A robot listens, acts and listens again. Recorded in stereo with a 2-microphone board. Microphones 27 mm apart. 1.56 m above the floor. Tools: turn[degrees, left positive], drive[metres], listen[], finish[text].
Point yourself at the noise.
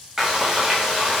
Action: turn[-30]
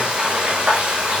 Thought: So it is at 140° right.
Action: turn[-140]
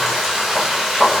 Thought: The frying is now 10° right.
Action: turn[-10]
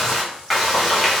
Action: finish[Facing the frying, 1 to 2 m away.]